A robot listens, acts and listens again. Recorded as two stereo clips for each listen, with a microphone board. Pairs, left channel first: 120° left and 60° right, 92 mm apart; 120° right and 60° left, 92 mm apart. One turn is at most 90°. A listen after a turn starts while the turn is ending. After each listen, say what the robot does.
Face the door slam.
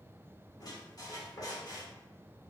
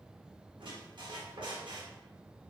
Keep listening.
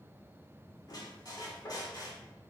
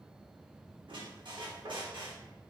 Keep listening.
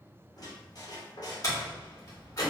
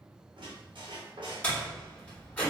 Turn 90° left.
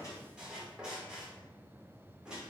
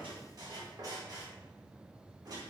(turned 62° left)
Turn 90° left.
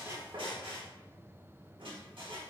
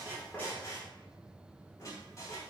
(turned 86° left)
Turn 20° left.
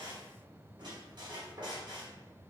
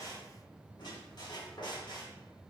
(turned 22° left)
Facing where the door slam came from. I can't hear it now.